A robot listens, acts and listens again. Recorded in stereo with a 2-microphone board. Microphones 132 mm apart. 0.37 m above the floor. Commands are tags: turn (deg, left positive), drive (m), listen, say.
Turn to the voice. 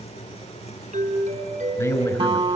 <turn deg="25"/>
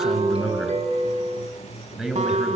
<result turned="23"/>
<say>Facing the man speaking, over 4 m away.</say>